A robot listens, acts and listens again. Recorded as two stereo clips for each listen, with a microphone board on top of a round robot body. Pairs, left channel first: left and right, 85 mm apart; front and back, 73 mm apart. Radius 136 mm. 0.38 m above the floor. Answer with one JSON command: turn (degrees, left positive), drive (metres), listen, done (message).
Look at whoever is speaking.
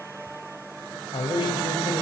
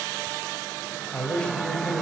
{"turn": 75}
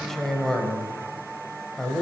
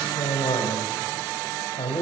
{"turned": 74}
{"done": "Facing the man speaking, 2 to 4 m away."}